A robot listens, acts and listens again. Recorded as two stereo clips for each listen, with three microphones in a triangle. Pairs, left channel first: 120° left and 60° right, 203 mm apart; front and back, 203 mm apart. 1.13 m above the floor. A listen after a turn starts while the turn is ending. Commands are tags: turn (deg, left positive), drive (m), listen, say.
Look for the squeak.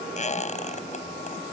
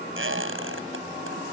<turn deg="175"/>
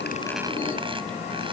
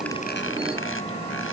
<listen/>
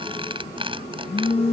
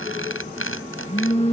<say>Found it: a squeak, straight ahead.</say>